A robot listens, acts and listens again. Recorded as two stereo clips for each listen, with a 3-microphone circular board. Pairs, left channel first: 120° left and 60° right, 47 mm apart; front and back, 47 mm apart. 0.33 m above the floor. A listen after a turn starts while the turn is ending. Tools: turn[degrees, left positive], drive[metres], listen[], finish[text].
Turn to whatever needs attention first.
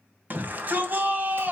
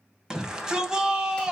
Thought: The shout: 105° right.
Action: turn[-105]
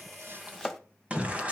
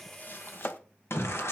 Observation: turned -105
Action: finish[Found it: a shout, straight ahead, 2 to 4 m away.]